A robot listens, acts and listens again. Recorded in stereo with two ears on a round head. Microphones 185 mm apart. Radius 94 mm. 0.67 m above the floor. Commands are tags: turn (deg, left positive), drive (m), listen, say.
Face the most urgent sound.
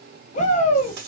<turn deg="35"/>
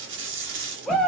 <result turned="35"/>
<say>Found it: a shout, straight ahead.</say>